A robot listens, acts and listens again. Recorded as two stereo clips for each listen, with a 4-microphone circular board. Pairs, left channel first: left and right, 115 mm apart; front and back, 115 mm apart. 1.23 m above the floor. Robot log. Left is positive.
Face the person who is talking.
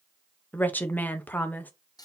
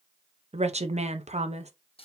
note: The woman speaking: 165° left.
cmd yaw +165
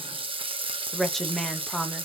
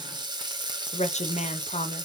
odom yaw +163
end: Found it: a woman speaking, straight ahead.